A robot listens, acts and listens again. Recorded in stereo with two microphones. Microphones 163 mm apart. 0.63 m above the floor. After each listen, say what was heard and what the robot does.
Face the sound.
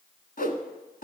The whoosh: about 60° left or 120° left. Turn 60° left.
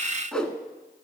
Facing the whoosh, 1 to 2 m away.